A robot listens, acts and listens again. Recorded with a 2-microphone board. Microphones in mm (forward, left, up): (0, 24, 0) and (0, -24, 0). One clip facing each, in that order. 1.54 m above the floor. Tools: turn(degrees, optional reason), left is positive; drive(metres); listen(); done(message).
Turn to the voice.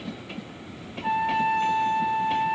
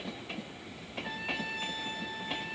listen()
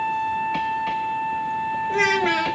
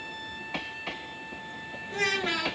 turn(degrees=60, reason="The child speaking: about 60° left or 120° left.")
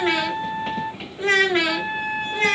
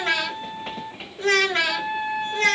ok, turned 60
turn(degrees=20, reason="So it is at 20° left.")
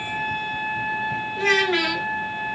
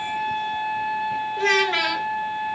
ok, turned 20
done("Found it: a child speaking, straight ahead, under 1 m away.")